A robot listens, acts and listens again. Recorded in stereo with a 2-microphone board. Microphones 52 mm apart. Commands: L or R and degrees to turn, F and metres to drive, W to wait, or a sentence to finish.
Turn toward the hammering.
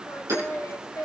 R90
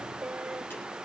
W
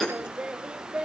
Found it: hammering, straight ahead.